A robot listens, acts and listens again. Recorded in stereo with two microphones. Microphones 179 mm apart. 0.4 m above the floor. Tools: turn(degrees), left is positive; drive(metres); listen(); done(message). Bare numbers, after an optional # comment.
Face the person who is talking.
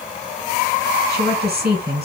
# The woman speaking: about 65° right or 115° right.
turn(-65)
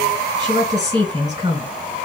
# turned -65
# So it is at 25° right.
turn(-25)
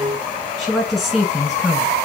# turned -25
done("Found it: a woman speaking, straight ahead.")